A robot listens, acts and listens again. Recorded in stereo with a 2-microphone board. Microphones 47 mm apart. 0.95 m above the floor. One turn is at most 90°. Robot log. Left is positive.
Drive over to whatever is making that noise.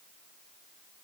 cmd idle
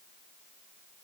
cmd idle
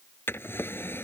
note: The drawer: about 55° left or 125° left.
cmd yaw +55
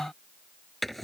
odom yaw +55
cmd fwd 1.0
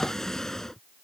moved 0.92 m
note: The drawer is now 10° left.
cmd yaw +10
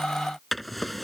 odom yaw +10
cmd fwd 1.0
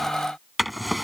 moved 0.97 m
cmd fwd 1.0
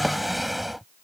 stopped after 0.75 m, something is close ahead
end: I am next to the drawer.